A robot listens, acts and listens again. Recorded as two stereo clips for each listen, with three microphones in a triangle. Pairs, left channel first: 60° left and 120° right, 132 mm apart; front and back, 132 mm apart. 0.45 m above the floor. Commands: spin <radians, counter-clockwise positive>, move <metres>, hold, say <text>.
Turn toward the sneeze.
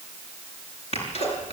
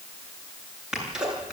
spin 1.66
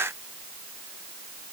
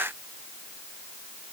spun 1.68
say I heard a sneeze from this way, but can't make it out now.